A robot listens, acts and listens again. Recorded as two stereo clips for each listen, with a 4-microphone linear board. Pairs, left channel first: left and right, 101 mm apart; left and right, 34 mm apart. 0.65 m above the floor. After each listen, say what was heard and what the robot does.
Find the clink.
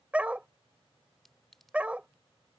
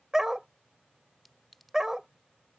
Turn 30° left.
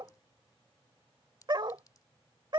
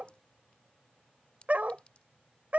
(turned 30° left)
So it is at 145° left. Turn 145° left.
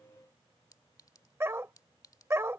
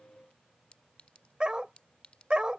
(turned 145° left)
The clink is now 35° left. Turn 35° left.
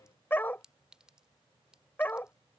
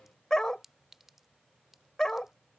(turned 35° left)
The clink is now 10° right. Turn 10° right.
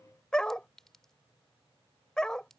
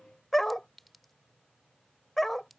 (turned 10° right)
Found it: a clink, straight ahead.